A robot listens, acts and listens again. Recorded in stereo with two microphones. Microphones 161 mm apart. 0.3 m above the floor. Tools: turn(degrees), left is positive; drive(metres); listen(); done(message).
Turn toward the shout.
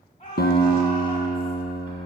turn(degrees=40)
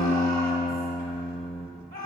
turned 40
turn(degrees=95)
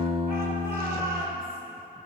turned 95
turn(degrees=-20)
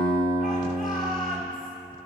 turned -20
done("Facing the shout.")